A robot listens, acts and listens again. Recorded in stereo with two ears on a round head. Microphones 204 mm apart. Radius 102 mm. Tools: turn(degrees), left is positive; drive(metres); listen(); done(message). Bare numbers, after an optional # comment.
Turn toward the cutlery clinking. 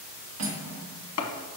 # The cutlery clinking: about 75° right or 105° right.
turn(-75)
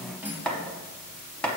# So it is at 10° right.
turn(-10)
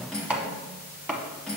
done("Facing the cutlery clinking.")